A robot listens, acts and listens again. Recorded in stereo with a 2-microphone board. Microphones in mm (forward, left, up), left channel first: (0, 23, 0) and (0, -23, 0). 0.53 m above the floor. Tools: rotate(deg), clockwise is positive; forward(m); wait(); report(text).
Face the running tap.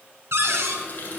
rotate(-40)
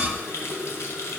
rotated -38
rotate(-100)
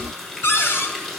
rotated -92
rotate(-10)
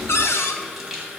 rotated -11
report("Found it: a running tap, straight ahead.")